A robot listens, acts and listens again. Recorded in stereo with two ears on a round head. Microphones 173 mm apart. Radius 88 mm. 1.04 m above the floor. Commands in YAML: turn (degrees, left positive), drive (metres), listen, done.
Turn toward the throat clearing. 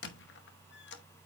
listen: true
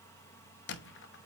listen: true
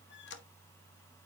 done: "I can't make out throat clearing, only a squeak."